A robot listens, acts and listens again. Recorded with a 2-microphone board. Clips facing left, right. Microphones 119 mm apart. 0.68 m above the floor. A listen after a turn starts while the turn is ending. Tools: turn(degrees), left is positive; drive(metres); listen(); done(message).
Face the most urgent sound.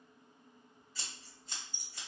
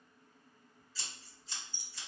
listen()
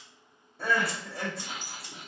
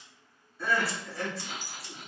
turn(degrees=60)
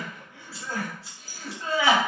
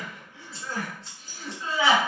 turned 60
turn(degrees=55)
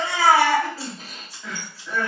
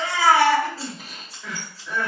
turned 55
done("Found it: crying, straight ahead.")